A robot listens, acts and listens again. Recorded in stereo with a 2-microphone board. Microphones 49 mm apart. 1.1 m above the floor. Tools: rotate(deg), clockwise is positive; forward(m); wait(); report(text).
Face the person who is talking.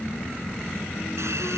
wait()
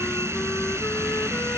wait()
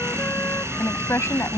rotate(-60)
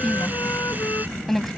report("Facing the woman speaking.")